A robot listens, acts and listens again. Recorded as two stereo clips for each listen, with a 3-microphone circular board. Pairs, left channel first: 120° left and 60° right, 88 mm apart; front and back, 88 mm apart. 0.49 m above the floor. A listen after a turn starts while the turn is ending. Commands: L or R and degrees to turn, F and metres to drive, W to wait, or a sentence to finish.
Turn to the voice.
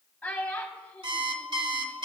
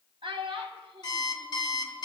R165
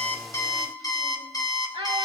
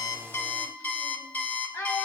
R55
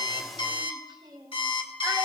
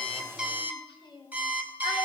W
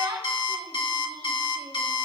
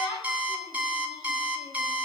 R20
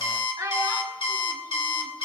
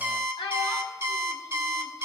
R10
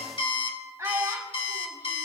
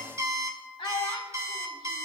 Found it: a child speaking, straight ahead, 1 to 2 m away.